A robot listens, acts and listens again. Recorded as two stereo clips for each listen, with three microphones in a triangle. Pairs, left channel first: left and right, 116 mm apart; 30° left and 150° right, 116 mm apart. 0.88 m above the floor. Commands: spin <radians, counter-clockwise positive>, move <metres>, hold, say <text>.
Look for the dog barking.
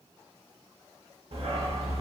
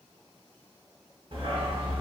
spin -2.01
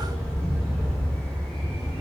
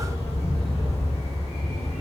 spin 0.17
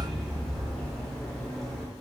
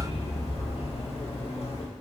say Found it: a dog barking, straight ahead, under 1 m away.